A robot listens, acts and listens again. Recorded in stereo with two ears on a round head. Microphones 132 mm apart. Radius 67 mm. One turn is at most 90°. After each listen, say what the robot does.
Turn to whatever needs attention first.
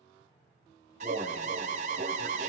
Turn 50° right.
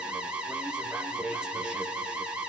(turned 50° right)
Turn 10° right.
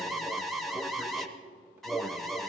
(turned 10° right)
Facing the alarm, under 1 m away.